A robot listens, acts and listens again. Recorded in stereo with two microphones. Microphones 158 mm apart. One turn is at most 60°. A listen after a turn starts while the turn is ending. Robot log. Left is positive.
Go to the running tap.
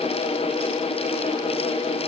cmd idle
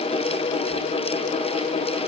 cmd idle
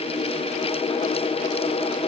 end: I can't make out a running tap to turn to.